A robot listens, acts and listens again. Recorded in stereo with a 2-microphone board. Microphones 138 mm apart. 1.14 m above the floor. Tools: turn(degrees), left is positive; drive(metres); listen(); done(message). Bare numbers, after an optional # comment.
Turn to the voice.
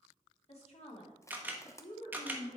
# The woman speaking: about 50° left or 130° left.
turn(50)
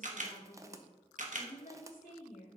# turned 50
# So it is at 80° left.
turn(80)
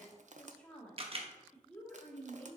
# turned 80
# The woman speaking is now 10° left.
turn(10)
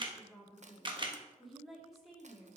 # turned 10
done("Facing the woman speaking.")